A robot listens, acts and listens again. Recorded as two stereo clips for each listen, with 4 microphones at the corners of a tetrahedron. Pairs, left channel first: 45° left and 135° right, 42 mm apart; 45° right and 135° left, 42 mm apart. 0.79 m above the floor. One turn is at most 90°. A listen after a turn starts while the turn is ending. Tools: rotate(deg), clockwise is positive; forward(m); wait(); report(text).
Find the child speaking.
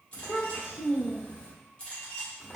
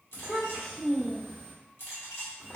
report("Facing the child speaking, 1 to 2 m away.")